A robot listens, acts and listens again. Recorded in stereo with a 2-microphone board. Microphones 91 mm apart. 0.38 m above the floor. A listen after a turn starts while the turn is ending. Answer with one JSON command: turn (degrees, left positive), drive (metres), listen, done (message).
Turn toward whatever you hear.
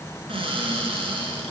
{"turn": -90}
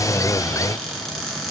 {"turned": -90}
{"done": "Found it: a cupboard door, straight ahead, 1 to 2 m away."}